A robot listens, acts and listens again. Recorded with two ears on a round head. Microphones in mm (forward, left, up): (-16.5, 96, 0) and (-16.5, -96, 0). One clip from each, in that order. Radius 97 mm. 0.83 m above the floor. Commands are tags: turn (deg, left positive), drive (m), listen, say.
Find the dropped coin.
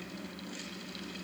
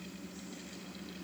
<listen/>
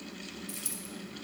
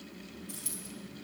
<turn deg="15"/>
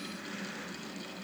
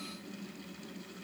<listen/>
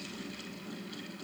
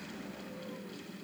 <say>I heard a dropped coin, but can't make it out now. It was about straight ahead or 150° left.</say>